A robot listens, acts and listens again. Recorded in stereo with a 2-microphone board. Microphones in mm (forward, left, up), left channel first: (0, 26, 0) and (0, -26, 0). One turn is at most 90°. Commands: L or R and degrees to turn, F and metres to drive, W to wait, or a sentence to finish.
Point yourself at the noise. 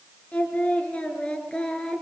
L30
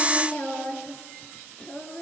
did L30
L20
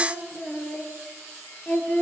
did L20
L25
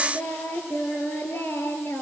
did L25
L90
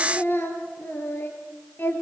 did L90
L45
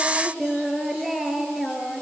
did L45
Found it: singing, straight ahead.